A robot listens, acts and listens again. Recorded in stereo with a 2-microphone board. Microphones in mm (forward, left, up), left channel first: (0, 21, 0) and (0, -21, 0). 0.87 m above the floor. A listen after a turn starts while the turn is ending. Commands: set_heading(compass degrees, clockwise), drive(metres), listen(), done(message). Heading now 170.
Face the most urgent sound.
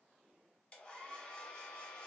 listen()
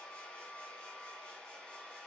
listen()
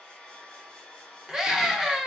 set_heading(200)
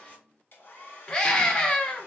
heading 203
set_heading(183)
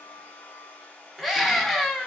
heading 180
done("Found it: a scream, straight ahead, 1 to 2 m away.")